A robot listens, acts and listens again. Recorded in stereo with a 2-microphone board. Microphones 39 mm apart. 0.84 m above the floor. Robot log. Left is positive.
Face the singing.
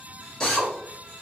cmd idle
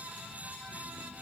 cmd idle
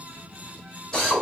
end: I can't make out singing to turn to.